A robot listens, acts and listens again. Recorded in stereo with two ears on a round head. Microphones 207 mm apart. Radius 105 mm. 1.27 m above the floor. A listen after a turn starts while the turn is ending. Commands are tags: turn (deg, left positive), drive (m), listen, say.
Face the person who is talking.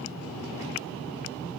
<listen/>
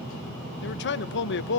<turn deg="50"/>
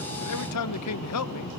<turn deg="75"/>
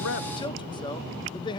<turn deg="20"/>
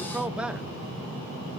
<say>Found it: a man speaking, straight ahead.</say>